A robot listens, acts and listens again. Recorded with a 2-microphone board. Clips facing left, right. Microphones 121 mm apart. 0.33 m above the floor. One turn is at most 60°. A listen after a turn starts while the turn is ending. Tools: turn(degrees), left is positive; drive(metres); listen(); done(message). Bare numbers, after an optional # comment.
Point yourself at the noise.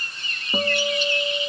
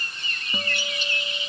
# The guitar: about 45° left or 135° left.
turn(45)
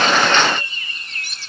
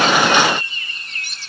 listen()
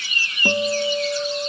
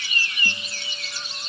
# So it is at 95° left.
turn(60)
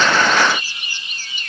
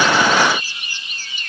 # Nothing new. It was at 35° left.
turn(35)
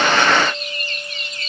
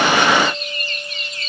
listen()
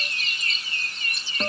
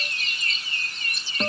done("Facing the guitar.")